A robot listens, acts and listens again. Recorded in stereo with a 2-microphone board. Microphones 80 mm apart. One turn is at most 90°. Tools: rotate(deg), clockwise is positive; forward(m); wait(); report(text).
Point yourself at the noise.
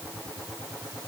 wait()
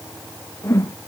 rotate(-35)
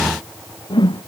rotate(-90)
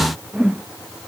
rotate(10)
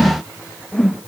report("Facing the whoosh.")